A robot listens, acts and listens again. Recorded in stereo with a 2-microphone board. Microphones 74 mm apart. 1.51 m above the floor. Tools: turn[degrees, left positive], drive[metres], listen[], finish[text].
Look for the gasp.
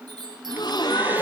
Thought: The gasp: about 75° left or 105° left.
Action: turn[75]
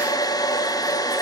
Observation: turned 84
Action: listen[]
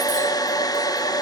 Action: finish[I heard a gasp, but can't make it out now. It was about 10° right or 25° left.]